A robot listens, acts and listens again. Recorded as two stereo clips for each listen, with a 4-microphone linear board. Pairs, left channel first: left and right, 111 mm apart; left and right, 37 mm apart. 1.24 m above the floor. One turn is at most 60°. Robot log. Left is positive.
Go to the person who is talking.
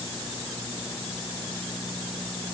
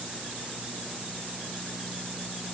cmd idle
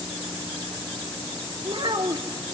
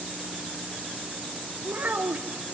note: The child speaking: about 50° right or 130° right.
cmd yaw -50
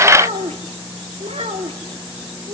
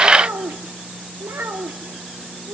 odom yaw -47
note: So it is at 80° right.
cmd yaw -60
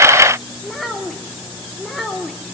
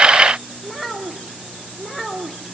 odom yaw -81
cmd fwd 1.0
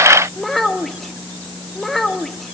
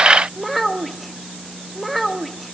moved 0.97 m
cmd fwd 1.0
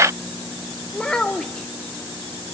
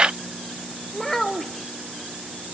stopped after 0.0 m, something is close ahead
end: Arrived at the child speaking, straight ahead.